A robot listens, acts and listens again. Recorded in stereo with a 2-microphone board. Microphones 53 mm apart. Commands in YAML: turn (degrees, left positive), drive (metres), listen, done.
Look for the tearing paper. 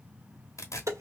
turn: 70
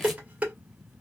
listen: true
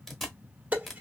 done: "Facing the tearing paper."